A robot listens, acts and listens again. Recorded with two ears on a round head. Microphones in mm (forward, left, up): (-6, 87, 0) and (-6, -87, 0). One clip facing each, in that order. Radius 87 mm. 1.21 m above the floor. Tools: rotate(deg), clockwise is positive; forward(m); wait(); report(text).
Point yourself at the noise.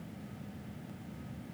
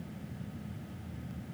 wait()
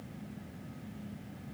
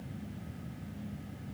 wait()
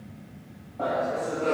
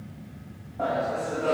rotate(30)
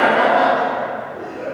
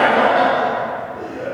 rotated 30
rotate(125)
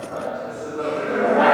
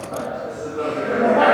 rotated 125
rotate(30)
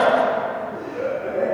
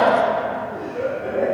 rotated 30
report("Found it: laughter, straight ahead.")